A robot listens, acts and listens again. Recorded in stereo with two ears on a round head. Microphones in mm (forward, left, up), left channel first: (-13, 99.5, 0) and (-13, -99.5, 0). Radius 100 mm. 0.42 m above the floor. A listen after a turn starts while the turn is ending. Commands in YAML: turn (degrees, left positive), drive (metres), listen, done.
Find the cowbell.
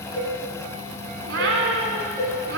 turn: 30
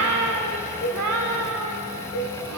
turn: 140
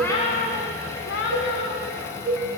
turn: -15
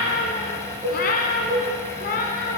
done: "Found it: a cowbell, straight ahead."